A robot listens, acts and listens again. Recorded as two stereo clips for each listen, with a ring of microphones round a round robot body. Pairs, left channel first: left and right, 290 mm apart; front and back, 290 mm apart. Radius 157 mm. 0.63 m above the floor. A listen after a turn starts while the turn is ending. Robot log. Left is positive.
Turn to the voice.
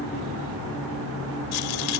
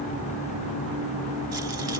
cmd idle
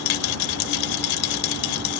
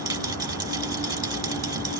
cmd idle
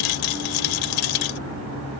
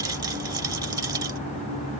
end: I can't make out anyone speaking, only a rattle.